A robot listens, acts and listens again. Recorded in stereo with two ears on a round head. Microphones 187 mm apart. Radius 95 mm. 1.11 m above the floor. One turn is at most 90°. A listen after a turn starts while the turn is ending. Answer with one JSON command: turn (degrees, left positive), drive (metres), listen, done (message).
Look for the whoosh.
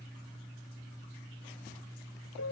{"listen": true}
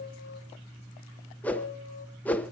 {"turn": 30}
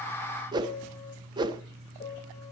{"turn": -20}
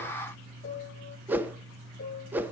{"turn": -10}
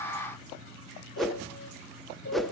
{"done": "Found it: a whoosh, straight ahead, under 1 m away."}